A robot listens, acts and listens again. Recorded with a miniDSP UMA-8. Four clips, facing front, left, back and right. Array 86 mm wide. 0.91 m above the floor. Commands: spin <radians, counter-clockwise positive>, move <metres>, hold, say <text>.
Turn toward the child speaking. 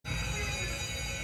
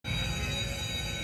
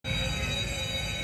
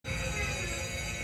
hold
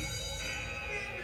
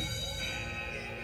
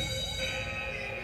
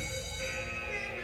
hold
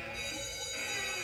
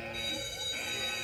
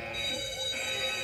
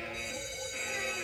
say I can't make out a child speaking to turn to.